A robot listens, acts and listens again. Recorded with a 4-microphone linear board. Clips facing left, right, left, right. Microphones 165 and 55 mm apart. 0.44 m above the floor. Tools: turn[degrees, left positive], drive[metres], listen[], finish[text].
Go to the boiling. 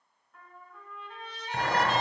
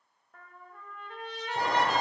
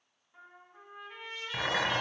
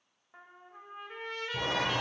Action: turn[90]
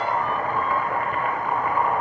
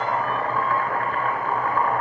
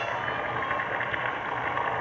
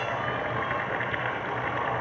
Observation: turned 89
Thought: So it is at 15° left.
Action: turn[15]
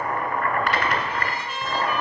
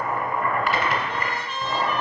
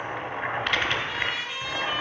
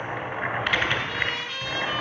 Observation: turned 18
Action: drive[1.0]
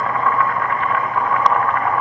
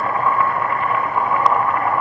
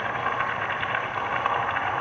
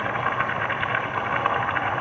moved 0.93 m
Action: drive[1.0]
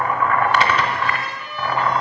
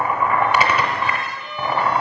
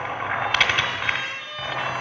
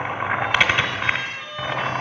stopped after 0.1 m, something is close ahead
Thought: The boiling is now 10° right.
Action: turn[-10]
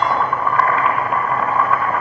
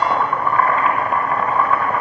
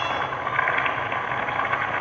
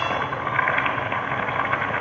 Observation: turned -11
Action: finish[I am next to the boiling.]